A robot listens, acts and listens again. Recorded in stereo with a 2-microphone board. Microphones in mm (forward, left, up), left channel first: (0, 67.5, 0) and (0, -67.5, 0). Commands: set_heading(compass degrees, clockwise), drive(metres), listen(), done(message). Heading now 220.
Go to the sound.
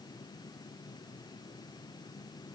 listen()
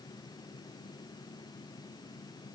listen()
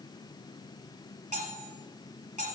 set_heading(290)
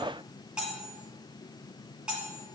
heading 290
drive(1.0)
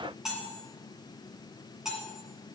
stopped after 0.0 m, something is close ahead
done("Blocked. The cutlery clinking is further on, straight ahead.")